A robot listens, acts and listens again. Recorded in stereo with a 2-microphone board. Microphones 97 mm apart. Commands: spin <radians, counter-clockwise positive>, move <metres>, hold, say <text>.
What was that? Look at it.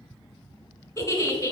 spin 0.61
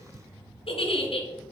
spin 1.92
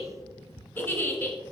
spin 0.35
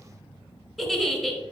say Found it: a giggle, straight ahead.